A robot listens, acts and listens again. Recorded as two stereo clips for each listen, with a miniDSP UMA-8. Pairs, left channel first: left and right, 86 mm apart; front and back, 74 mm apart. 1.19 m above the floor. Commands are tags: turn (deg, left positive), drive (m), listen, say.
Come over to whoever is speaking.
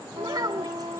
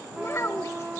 <turn deg="-50"/>
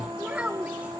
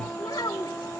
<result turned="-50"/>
<turn deg="-15"/>
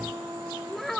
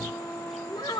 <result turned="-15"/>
<drive m="1.0"/>
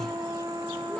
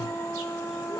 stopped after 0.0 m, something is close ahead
<listen/>
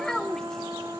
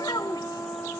<say>Something is in my way. I am facing the child speaking but have not reached it.</say>